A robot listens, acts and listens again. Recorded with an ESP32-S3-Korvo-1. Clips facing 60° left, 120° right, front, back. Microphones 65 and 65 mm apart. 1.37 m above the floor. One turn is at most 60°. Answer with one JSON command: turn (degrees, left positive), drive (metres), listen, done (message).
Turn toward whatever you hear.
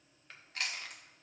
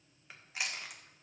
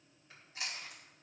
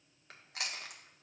{"turn": 60}
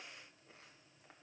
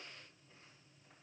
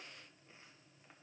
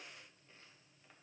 {"turn": 60}
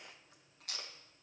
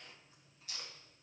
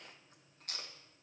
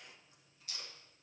{"turn": 35}
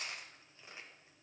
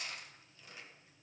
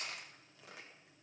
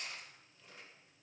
{"done": "Found it: chewing, straight ahead."}